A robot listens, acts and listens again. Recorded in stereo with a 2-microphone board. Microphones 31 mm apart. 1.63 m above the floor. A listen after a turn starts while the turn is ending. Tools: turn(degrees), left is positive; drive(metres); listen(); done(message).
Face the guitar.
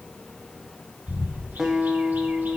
turn(degrees=-20)
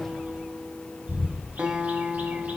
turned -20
turn(degrees=-145)
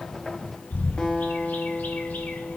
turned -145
turn(degrees=30)
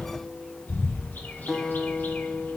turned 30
done("Facing the guitar.")